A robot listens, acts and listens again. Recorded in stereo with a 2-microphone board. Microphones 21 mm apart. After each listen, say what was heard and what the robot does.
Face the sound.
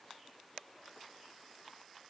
Keep listening.
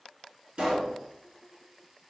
The pop: about 45° right or 135° right. Turn 45° right.
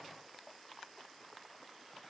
Keep listening.
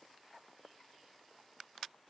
I heard a pop, but can't make it out now. It was about straight ahead or 90° right.